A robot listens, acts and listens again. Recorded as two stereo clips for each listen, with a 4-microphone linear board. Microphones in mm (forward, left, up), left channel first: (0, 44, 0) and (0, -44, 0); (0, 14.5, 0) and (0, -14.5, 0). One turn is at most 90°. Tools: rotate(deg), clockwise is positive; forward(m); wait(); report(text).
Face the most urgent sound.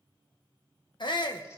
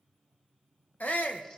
rotate(-60)
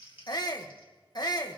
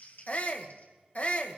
rotate(-55)
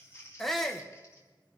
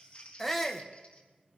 report("Facing the shout.")